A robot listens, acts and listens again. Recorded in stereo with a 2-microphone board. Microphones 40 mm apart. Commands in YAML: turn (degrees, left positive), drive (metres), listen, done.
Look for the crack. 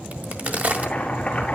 turn: -45
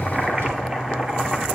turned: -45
listen: true
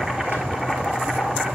done: "I heard a crack, but can't make it out now. It was about straight ahead or 90° right."